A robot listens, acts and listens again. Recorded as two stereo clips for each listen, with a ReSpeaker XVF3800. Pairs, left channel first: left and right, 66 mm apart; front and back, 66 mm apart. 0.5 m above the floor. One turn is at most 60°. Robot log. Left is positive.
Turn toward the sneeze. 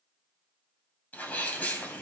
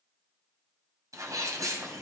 note: The sneeze: 155° left.
cmd yaw +60
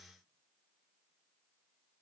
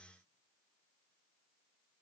note: Nothing new. It was at 95° left.
cmd yaw +60
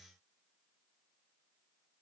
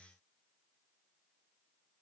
note: Nothing new. It was at 35° left.
cmd yaw +35
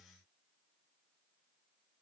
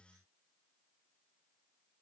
end: I heard a sneeze from this way, but can't make it out now.